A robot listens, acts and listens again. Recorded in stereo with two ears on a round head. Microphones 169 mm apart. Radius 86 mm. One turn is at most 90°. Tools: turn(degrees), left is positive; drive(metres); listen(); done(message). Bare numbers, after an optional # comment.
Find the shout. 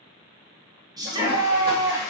# The shout: about 20° right or 160° right.
turn(-20)
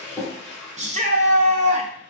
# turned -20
# So it is at 140° right.
turn(-90)
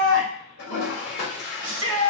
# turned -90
# The shout is now 75° right.
turn(-75)
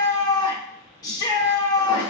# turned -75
# The shout is now 20° left.
turn(20)
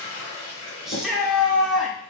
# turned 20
done("Facing the shout, under 1 m away.")